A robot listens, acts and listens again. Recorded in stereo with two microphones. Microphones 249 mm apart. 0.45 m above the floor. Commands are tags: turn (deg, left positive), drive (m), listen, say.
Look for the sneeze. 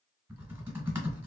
<listen/>
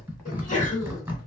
<turn deg="30"/>
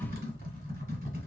<listen/>
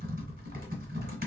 <say>I heard a sneeze, but can't make it out now. It was about straight ahead or 120° left.</say>